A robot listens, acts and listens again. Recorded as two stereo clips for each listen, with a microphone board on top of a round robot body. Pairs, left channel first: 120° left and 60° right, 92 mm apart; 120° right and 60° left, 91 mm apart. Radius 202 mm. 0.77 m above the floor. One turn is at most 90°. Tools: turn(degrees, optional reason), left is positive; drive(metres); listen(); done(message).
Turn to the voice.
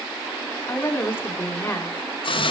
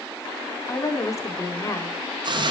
turn(degrees=-90, reason="The woman speaking: 175° right.")
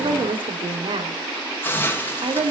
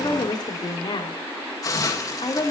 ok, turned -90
turn(degrees=-85, reason="The woman speaking is now 85° right.")
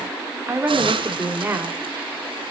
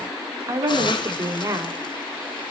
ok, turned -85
done("Found it: a woman speaking, straight ahead.")